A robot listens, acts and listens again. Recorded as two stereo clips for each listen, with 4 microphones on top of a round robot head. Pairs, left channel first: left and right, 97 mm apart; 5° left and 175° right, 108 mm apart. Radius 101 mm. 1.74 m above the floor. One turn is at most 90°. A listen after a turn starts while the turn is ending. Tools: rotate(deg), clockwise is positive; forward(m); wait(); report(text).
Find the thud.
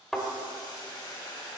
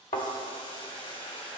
report("Found it: a thud, straight ahead, 2 to 4 m away.")